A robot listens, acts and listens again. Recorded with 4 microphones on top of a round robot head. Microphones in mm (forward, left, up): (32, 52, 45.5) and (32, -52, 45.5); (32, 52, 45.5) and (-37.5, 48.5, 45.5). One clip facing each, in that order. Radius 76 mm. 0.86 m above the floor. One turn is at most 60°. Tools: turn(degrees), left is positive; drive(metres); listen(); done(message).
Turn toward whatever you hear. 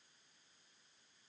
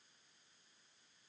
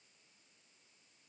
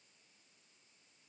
listen()
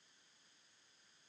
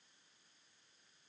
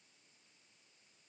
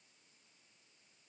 listen()
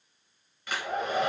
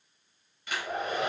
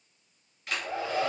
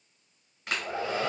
turn(degrees=60)
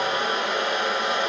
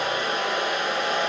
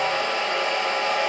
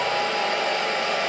turn(degrees=60)
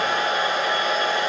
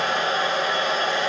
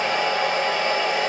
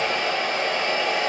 turn(degrees=15)
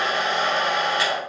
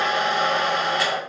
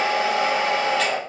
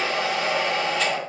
done("Found it: a hair dryer, straight ahead.")